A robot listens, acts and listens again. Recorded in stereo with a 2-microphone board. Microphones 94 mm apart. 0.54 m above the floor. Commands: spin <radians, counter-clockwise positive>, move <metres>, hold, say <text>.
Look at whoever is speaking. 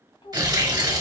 spin 1.57
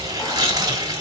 hold
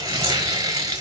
hold
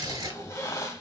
say I heard a child speaking from this way, but can't make it out now.